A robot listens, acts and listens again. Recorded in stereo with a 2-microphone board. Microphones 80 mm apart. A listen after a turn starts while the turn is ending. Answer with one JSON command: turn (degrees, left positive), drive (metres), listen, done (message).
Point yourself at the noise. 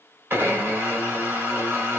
{"turn": -25}
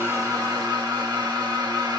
{"turn": -125}
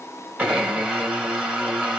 {"turn": -10}
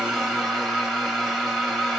{"done": "Found it: a blender, straight ahead, 2 to 4 m away."}